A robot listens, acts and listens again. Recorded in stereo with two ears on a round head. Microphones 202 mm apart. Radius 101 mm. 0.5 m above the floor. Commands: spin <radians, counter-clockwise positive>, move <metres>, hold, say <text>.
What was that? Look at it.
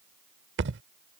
spin -0.96
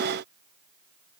hold
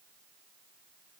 say I heard a thud, but can't make it out now. It was about straight ahead or 70° right.